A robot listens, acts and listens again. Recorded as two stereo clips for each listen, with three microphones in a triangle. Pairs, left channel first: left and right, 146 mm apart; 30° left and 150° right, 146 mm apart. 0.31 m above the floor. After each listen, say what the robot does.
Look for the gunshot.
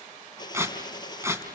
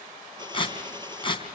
Turn 150° left.
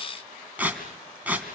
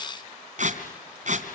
Facing where the gunshot came from. I can't hear it now.